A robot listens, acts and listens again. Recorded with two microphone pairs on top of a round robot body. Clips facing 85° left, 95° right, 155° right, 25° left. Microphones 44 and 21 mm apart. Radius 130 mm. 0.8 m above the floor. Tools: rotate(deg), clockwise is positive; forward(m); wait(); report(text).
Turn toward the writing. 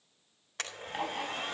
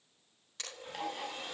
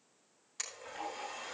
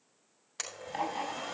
rotate(-30)
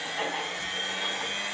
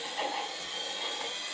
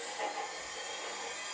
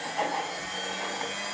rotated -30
report("Found it: writing, straight ahead, over 4 m away.")